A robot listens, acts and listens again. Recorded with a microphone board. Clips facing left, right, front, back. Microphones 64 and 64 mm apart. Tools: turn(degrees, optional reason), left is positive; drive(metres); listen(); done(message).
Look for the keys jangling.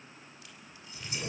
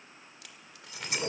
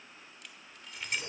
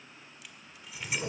turn(degrees=-95, reason="The keys jangling: 95° right.")
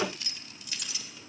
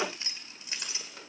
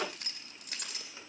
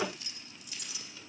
turn(degrees=-30, reason="The keys jangling is now 30° right.")
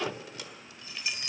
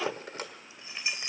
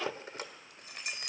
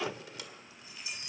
turn(degrees=-25, reason="The keys jangling is now 25° right.")
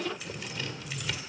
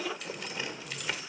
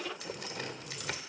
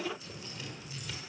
listen()
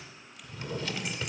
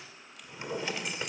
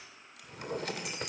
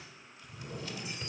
listen()
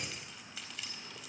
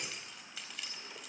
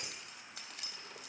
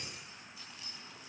done("Found it: keys jangling, straight ahead.")